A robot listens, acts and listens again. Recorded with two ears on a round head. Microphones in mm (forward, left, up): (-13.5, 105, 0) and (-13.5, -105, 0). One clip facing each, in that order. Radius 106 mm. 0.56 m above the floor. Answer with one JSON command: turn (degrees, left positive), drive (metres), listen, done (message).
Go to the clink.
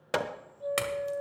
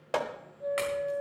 {"turn": 60}
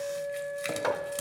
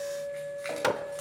{"turn": 50}
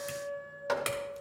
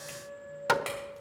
{"turn": 25}
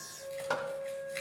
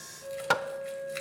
{"turn": -10}
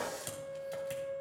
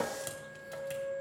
{"listen": true}
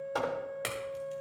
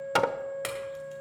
{"drive": 1.0}
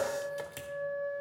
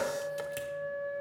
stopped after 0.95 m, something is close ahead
{"listen": true}
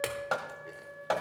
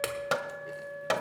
{"done": "Arrived at the clink, straight ahead."}